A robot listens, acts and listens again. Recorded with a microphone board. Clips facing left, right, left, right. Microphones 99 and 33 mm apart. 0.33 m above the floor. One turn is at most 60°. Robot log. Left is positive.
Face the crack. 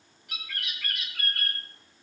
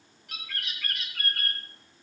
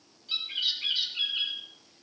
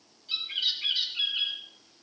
cmd idle
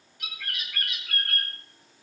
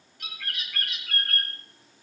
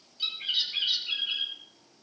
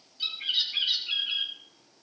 cmd idle
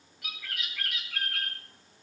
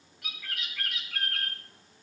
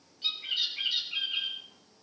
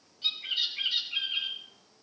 end: I can't make out a crack, only a bird.